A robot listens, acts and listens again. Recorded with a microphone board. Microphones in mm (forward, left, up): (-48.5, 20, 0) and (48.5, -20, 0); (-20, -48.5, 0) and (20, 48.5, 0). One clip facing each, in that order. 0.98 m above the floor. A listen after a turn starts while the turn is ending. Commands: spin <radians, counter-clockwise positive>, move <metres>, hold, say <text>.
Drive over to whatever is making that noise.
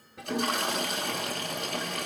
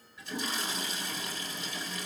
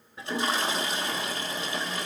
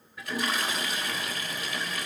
spin -3.05
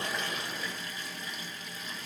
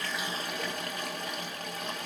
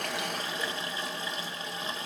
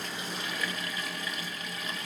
spin -0.96
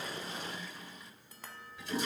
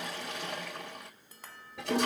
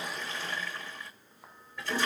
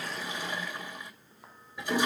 spin -0.17
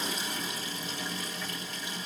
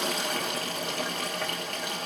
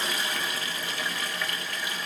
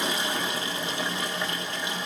move 1.0
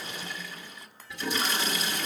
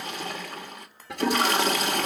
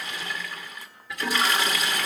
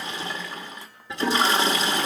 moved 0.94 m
move 1.0
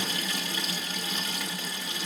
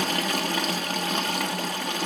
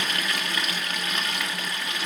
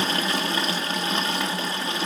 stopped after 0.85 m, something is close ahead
say I am next to the toilet flushing.